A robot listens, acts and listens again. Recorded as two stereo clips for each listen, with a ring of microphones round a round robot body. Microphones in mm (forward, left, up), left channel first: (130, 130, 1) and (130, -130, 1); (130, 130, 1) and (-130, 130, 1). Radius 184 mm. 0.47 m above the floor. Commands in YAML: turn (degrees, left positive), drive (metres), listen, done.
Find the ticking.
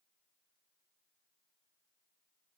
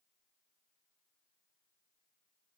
listen: true
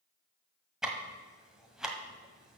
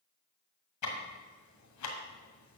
done: "Found it: ticking, straight ahead."